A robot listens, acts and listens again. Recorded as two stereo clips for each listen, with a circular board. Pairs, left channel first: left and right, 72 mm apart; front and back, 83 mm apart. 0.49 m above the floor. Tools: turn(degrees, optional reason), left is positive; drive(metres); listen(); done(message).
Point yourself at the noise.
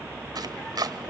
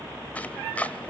turn(degrees=-70, reason="The chopping: 70° right.")
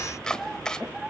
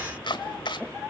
turn(degrees=10, reason="The chopping is now 10° left.")
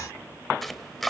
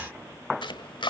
done("Found it: chopping, straight ahead, 1 to 2 m away.")